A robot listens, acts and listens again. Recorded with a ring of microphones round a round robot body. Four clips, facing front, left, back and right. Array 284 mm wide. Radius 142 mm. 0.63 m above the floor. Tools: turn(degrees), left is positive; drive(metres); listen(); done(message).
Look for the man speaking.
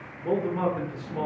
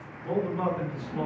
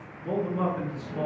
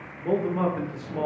turn(degrees=-65)
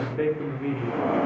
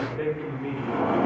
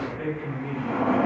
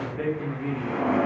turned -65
turn(degrees=-15)
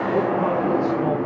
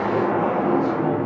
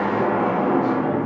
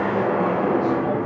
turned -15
listen()
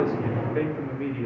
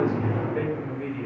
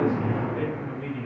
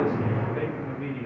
done("Found it: a man speaking, straight ahead, 1 to 2 m away.")